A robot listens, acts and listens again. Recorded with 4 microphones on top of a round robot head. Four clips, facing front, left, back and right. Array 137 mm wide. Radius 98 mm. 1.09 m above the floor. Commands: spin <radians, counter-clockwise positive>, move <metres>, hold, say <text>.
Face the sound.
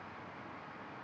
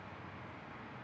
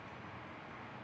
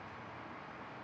hold
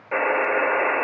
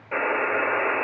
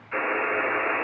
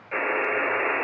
spin 0.44
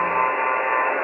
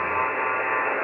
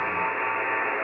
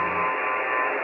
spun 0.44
spin 0.17
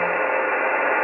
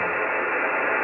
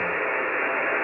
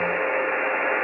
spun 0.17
say Facing the buzzer.